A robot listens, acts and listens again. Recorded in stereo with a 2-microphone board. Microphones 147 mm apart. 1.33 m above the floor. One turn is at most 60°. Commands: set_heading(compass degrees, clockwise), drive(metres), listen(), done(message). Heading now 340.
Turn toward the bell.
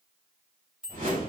set_heading(10)
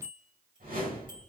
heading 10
set_heading(70)
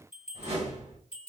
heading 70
set_heading(130)
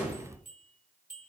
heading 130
set_heading(190)
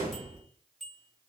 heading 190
done("Found it: a bell, straight ahead.")